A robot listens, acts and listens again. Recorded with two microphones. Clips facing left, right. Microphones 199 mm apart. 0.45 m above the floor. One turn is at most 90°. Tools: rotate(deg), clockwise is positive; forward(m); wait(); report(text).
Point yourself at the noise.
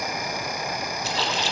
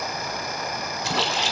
rotate(60)
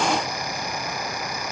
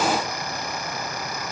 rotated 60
wait()
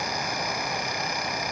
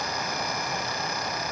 report("I heard a splash, but can't make it out now. It was about straight ahead or 60° right.")